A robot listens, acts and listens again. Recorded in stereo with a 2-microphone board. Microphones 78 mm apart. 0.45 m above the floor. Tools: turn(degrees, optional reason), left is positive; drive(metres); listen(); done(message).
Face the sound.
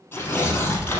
turn(degrees=25, reason="The tearing paper: about 25° left or 155° left.")
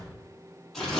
done("Found it: tearing paper, straight ahead.")